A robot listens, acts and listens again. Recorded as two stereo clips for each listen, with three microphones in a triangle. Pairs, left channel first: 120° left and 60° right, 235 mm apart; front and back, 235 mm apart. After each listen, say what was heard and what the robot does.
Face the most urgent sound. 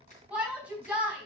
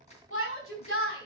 The shout: 25° left. Turn 25° left.
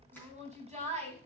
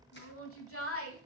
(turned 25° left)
Facing the shout.